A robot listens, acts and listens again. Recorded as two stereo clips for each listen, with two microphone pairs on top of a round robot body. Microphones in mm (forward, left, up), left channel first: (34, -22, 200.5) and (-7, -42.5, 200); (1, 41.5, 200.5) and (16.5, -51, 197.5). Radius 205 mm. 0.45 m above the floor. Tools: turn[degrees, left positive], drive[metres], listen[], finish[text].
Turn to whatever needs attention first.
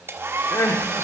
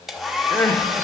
Thought: The crying: 30° left.
Action: turn[30]
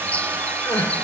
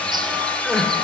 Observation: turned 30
Thought: The crying is now 10° left.
Action: turn[10]
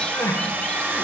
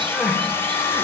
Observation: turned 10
Action: listen[]
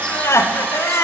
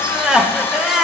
Action: finish[Facing the crying.]